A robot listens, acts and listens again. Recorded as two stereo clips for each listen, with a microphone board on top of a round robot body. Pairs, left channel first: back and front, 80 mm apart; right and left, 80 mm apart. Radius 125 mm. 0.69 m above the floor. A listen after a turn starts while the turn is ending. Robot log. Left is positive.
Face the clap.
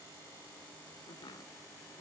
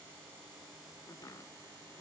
cmd idle
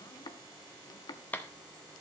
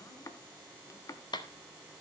note: The clap: 110° right.
cmd yaw -110
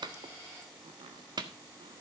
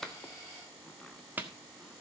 note: The clap is now 25° left.
cmd yaw +25
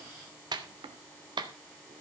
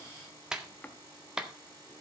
note: The clap is now 10° left.
cmd yaw +10
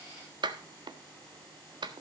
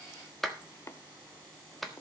end: Found it: a clap, straight ahead, 1 to 2 m away.